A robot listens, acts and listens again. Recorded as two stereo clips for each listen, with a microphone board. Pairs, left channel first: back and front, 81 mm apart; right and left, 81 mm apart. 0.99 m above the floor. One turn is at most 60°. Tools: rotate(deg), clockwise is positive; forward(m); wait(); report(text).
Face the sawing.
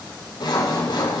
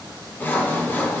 rotate(60)
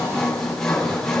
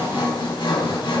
rotate(60)
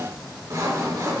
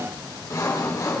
rotate(45)
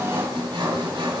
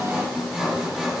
report("Facing the sawing.")